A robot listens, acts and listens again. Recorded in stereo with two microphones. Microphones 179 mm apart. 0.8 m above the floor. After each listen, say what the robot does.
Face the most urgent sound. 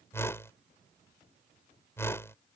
Keep listening.
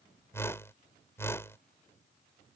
Keep listening.
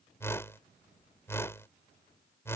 I can't make out anything urgent to turn to.